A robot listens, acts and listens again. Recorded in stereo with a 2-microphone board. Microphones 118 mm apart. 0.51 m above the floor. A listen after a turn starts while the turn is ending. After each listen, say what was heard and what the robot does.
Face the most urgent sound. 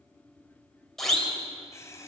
Turn 30° left.
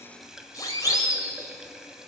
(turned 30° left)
So it is at 145° left. Turn 145° left.
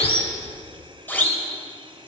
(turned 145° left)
The siren is now 15° left. Turn 15° left.
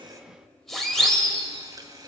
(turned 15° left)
Found it: a siren, straight ahead.